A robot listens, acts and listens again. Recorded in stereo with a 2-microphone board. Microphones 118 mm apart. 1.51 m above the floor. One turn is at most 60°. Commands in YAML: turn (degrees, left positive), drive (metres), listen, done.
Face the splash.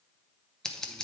listen: true
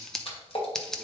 turn: 55
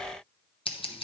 listen: true
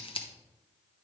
done: "I heard a splash, but can't make it out now. It was about straight ahead or 70° left."